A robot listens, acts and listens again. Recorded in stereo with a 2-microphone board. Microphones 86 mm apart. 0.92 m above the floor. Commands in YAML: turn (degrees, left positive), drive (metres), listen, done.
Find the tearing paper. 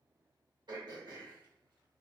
listen: true
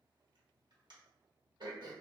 listen: true
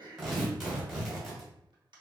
turn: 30
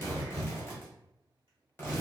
turn: 150
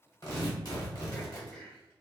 turn: 55
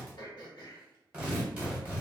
turn: -15
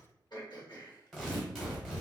done: "Facing the tearing paper, 1 to 2 m away."